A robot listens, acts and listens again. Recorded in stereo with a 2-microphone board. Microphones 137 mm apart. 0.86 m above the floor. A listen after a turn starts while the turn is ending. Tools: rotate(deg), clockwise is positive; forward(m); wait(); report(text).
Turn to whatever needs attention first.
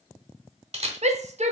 rotate(60)
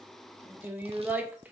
rotate(15)
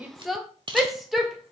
report("Facing the shout, under 1 m away.")